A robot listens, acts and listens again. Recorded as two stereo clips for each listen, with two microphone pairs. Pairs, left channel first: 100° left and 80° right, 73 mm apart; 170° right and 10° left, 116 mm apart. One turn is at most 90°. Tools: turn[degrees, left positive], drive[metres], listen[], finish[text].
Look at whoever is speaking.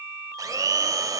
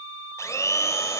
Action: listen[]
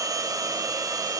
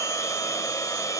Action: listen[]
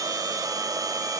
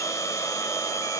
Action: finish[I can't make out anyone speaking, only a blender.]